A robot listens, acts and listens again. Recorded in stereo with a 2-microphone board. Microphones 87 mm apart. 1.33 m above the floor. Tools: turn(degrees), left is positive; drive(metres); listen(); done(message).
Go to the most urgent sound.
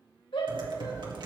turn(degrees=75)
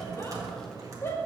turn(degrees=30)
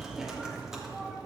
listen()
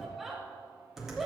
drive(metres=1.0)
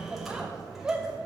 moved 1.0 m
turn(degrees=-15)
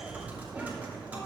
listen()
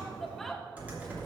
drive(metres=1.0)
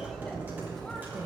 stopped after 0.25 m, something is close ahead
listen()
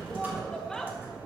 done("I am next to the shout.")